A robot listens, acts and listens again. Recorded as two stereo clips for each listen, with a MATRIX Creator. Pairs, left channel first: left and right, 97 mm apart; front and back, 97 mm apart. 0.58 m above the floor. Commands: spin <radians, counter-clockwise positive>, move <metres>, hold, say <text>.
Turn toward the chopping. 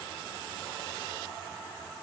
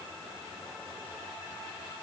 hold
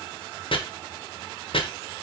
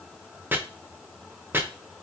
spin 1.92
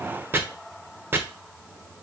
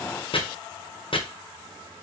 spin -0.35
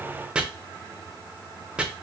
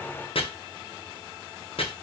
spin -0.17
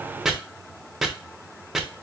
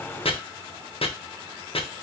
say Facing the chopping.